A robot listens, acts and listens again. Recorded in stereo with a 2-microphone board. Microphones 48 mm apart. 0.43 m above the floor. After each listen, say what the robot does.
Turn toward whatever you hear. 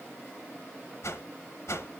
Turn 75° left.
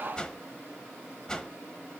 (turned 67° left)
Turn 15° left.
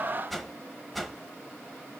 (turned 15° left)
Facing the whoosh.